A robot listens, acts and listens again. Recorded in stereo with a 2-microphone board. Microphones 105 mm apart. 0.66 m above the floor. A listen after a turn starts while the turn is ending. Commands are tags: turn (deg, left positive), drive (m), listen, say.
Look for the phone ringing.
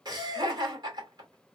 <listen/>
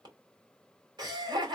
<listen/>
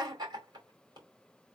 <say>I can't make out a phone ringing, only laughter.</say>